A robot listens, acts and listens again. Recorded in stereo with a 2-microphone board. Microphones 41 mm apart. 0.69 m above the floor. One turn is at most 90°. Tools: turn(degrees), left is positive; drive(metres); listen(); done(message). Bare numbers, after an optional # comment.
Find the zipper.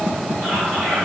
listen()
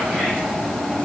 listen()
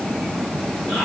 done("I can't make out a zipper, only whispering.")